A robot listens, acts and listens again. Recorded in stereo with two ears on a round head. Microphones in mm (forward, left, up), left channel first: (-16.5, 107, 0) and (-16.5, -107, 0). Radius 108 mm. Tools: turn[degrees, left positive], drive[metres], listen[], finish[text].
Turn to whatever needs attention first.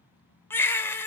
Action: turn[30]
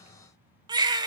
Thought: So it is at 20° right.
Action: turn[-20]
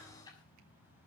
Action: listen[]
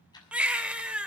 Action: finish[Found it: a baby crying, straight ahead, 1 to 2 m away.]